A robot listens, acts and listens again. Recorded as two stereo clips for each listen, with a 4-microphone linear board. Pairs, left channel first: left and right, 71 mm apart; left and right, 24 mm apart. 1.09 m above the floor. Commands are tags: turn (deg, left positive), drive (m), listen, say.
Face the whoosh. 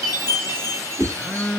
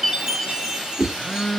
<turn deg="-50"/>
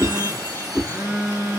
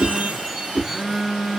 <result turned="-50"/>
<turn deg="-15"/>
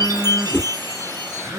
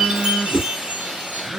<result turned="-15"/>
<turn deg="-10"/>
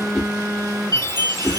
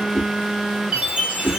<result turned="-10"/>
<say>Facing the whoosh.</say>